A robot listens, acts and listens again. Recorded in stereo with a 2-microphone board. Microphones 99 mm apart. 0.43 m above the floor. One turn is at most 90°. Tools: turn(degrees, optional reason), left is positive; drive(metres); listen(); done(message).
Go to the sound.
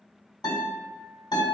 turn(degrees=50, reason="The guitar: about 50° left or 130° left.")
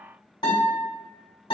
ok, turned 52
turn(degrees=75, reason="So it is at 75° left.")
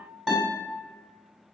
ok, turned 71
drive(metres=1.0)
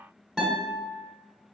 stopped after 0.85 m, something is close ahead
done("I am next to the guitar.")